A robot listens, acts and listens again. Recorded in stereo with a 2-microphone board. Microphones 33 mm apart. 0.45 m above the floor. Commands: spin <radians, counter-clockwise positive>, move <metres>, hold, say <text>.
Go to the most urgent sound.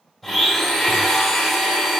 hold
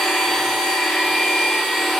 hold
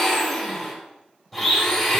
say I can't make out anything urgent to turn to.